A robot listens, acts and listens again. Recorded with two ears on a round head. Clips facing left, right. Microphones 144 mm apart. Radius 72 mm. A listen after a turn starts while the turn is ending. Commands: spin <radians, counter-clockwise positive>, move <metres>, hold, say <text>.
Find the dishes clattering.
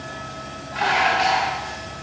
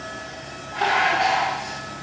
spin 0.96
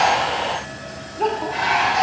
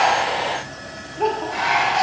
say Facing the dishes clattering, 1 to 2 m away.